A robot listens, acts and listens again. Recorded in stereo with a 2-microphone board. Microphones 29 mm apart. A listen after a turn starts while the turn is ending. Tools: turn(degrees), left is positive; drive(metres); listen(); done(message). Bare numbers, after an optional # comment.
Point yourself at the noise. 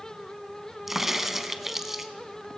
turn(-30)
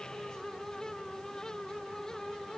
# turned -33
listen()
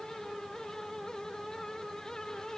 done("I heard a crack, but can't make it out now. It was about 25° left or 135° right.")